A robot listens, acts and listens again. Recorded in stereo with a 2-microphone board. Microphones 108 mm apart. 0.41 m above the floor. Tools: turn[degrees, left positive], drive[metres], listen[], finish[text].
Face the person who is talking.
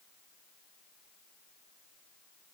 Action: listen[]
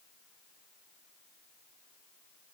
Action: listen[]
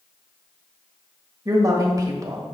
Thought: The woman speaking: about 35° right or 145° right.
Action: turn[-35]
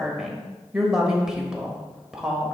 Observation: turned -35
Action: finish[Found it: a woman speaking, straight ahead.]